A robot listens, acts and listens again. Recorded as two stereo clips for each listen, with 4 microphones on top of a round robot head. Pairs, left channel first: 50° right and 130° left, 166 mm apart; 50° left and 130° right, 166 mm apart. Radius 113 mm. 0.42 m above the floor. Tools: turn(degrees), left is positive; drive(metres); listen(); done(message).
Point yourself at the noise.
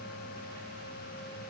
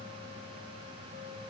listen()
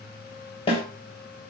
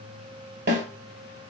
turn(degrees=-110)
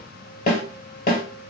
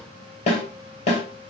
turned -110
done("Facing the snare drum, 2 to 4 m away.")